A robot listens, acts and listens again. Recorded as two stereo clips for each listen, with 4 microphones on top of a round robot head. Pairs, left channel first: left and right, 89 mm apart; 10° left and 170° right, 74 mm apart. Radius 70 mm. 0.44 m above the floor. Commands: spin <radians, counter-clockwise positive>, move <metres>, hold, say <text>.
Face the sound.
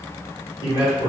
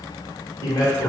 spin 0.87
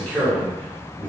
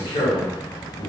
spin 0.26
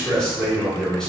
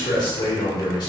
spin 0.17
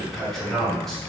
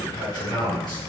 say Found it: a man speaking, straight ahead.